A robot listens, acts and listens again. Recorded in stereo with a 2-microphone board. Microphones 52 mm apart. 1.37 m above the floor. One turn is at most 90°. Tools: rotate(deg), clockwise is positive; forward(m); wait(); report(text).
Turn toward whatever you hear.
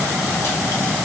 wait()
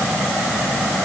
wait()
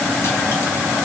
report("I can't make out anything.")